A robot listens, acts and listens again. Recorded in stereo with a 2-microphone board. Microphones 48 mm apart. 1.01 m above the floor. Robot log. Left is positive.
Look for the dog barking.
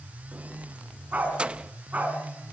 note: The dog barking: about 30° right or 150° right.
cmd yaw -30
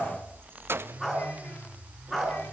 note: So it is at 10° left.
cmd yaw +10
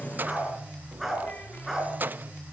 end: Facing the dog barking.